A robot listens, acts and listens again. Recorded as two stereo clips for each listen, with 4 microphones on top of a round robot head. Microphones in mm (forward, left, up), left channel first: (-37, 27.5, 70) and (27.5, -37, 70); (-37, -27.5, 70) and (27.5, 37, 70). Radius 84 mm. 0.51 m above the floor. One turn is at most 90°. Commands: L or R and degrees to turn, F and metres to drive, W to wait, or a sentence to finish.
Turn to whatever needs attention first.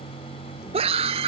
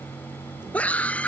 R60
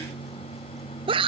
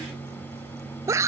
R15
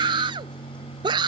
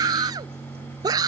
Facing the scream.